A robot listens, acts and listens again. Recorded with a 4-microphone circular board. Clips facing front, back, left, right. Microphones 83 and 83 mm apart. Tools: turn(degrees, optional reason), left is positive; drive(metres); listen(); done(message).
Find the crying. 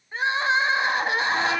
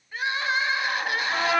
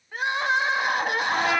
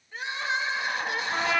turn(degrees=60, reason="The crying: 60° left.")
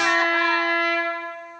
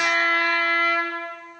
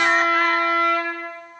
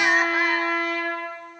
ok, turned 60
listen()
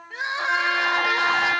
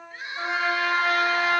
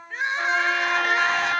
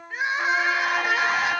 done("Facing the crying.")